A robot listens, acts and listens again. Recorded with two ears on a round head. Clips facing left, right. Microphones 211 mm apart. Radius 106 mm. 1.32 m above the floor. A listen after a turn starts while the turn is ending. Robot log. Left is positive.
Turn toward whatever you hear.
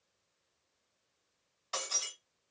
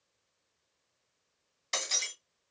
note: The breaking glass: about 30° right or 150° right.
cmd yaw -30
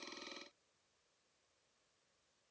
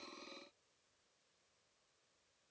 cmd idle
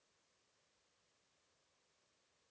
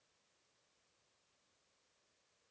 end: I heard breaking glass, but can't make it out now. It was about straight ahead or 120° right.